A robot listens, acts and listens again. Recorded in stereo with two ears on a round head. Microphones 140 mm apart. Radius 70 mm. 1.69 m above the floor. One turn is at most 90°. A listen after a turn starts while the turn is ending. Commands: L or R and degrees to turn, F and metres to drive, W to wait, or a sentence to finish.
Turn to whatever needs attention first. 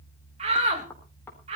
R40
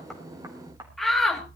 Found it: a shout, straight ahead, 2 to 4 m away.